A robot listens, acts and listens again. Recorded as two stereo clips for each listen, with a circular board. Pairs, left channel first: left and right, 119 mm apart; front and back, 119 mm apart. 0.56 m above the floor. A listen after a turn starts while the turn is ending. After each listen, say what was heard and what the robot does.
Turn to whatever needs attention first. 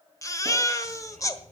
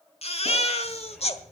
The baby crying: 30° left. Turn 30° left.
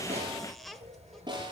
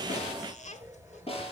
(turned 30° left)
Keep listening.
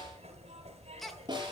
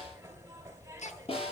Found it: a baby crying, straight ahead.